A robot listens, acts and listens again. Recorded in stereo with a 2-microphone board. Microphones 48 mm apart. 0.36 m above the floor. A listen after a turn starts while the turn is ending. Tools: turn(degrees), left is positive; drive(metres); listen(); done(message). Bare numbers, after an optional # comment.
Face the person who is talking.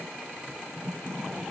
listen()
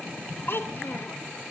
# The child speaking: about 55° left or 125° left.
turn(55)
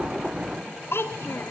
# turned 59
# So it is at 65° left.
turn(65)
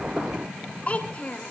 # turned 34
# The child speaking is now 30° left.
turn(30)
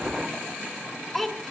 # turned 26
done("Found it: a child speaking, straight ahead, 2 to 4 m away.")